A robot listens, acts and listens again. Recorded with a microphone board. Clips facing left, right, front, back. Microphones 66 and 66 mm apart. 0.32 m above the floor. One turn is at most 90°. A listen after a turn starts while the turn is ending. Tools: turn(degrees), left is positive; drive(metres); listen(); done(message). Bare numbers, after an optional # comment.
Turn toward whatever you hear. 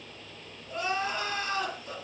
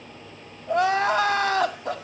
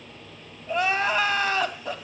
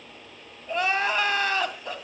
# The crying: 85° right.
turn(-85)
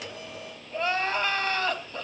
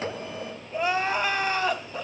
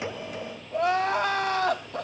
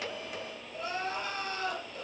# The crying is now 10° right.
turn(-10)
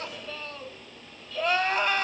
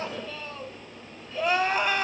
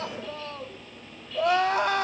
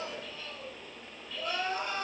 done("Found it: crying, straight ahead.")